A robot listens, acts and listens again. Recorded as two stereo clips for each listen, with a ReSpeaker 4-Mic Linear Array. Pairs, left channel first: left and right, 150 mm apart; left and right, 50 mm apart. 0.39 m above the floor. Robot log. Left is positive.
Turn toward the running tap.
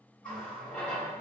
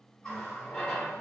cmd yaw +30
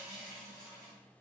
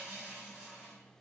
note: So it is at 20° right.
cmd yaw -20
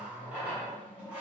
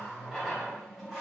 note: The running tap is now 10° right.
cmd yaw -10
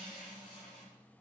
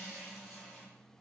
end: Facing the running tap.